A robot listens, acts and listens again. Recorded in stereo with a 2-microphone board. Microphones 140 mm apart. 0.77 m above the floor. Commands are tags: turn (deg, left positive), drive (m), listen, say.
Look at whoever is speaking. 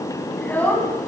<turn deg="30"/>
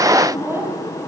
<turn deg="-20"/>
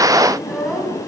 <say>Found it: a child speaking, straight ahead, 2 to 4 m away.</say>